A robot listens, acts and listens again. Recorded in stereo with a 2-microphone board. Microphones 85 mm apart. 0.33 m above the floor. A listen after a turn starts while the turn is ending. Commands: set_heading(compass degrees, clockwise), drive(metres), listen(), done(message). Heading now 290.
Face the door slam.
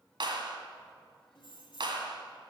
listen()
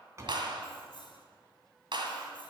set_heading(325)
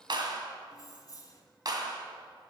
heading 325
listen()
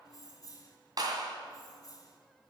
done("I heard a door slam, but can't make it out now. It was about straight ahead or 110° right.")